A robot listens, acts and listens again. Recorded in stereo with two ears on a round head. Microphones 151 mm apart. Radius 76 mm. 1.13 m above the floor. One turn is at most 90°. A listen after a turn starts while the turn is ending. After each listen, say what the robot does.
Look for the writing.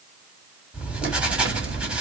Turn 30° right.
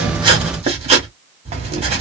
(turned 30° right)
Turn 90° right.
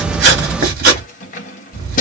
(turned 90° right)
Turn 55° right.
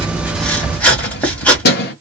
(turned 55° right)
Turn 10° left.
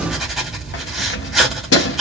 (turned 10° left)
Facing the writing.